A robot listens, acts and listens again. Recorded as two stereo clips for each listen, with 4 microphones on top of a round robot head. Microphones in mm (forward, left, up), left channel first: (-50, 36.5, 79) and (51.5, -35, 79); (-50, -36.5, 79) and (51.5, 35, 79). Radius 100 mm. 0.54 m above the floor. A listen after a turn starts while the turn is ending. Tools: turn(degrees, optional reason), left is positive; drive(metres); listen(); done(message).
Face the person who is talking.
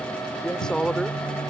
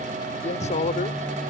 turn(degrees=-130, reason="The man speaking: 130° right.")
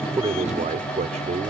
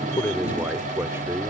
turn(degrees=-35, reason="The man speaking is now 35° right.")
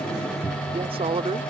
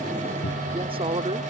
done("Facing the man speaking.")